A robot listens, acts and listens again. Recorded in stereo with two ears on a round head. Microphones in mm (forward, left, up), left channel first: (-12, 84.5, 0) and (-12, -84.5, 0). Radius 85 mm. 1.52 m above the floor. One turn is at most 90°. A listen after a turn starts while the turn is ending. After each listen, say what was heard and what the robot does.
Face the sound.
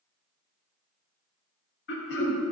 The throat clearing: about 65° left or 115° left. Turn 65° left.
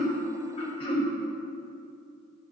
So it is at 30° left. Turn 30° left.
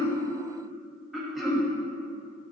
Facing the throat clearing.